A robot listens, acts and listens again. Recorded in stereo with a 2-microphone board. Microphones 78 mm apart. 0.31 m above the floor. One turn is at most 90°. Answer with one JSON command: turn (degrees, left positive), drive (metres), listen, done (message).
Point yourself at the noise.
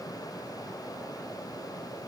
{"listen": true}
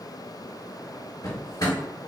{"turn": 60}
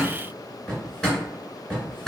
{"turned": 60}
{"done": "Facing the drawer."}